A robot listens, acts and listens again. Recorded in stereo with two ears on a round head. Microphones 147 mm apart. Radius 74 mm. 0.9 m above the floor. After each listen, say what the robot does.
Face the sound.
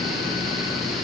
Keep listening.
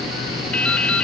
Turn 30° left.
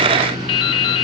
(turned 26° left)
Turn 145° left.
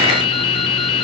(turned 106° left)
Turn 40° left.
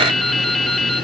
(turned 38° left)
Facing the dripping, 1 to 2 m away.